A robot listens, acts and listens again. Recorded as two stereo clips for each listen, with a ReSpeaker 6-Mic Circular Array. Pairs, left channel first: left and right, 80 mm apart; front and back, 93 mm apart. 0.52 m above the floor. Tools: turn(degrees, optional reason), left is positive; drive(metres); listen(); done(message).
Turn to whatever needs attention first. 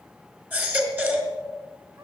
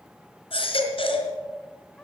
turn(degrees=-20, reason="The baby crying: 20° right.")
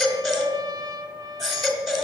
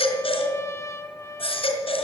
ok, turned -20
done("Found it: a baby crying, straight ahead, 2 to 4 m away.")